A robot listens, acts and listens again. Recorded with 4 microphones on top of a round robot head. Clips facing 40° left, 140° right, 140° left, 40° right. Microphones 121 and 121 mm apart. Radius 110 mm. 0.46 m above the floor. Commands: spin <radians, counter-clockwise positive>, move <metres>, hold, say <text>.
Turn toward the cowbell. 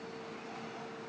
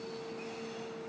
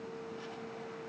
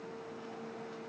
hold
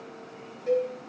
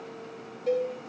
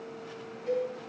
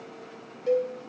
spin -1.22
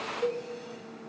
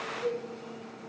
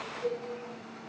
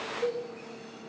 say Facing the cowbell.